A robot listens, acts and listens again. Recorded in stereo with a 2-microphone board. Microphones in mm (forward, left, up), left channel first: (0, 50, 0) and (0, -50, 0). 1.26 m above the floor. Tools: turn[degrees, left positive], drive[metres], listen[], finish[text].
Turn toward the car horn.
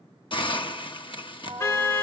Thought: The car horn: about 25° left or 155° left.
Action: turn[25]
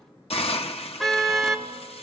Action: finish[Facing the car horn.]